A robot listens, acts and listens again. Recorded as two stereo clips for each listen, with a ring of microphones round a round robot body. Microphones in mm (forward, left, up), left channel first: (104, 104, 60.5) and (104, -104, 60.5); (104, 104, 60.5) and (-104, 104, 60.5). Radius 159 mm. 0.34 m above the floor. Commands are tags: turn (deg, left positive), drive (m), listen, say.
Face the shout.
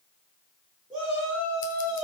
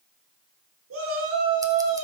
<turn deg="-175"/>
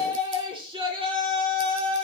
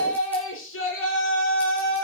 <turn deg="-25"/>
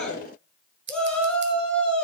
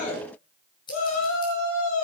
<say>Found it: a shout, straight ahead.</say>